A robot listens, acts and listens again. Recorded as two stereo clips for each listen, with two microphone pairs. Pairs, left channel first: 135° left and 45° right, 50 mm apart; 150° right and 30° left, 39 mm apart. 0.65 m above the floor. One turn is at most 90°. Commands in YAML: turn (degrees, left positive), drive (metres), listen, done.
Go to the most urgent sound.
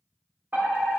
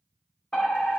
turn: -80
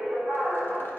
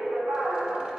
turn: 25
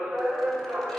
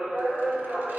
turn: -20
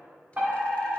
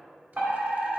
drive: 1.0
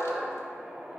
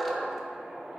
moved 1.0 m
turn: 10
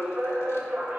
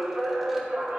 drive: 1.0
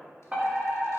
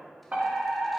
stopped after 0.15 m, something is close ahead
done: "Arrived at the fire alarm, straight ahead."